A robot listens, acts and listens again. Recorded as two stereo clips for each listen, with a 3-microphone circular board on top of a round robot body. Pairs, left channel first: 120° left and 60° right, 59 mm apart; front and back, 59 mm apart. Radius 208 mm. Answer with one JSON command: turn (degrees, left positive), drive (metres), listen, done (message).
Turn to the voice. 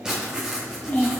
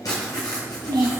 {"turn": 180}
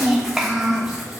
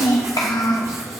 {"turn": 15}
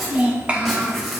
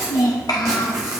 {"done": "Facing the child speaking, under 1 m away."}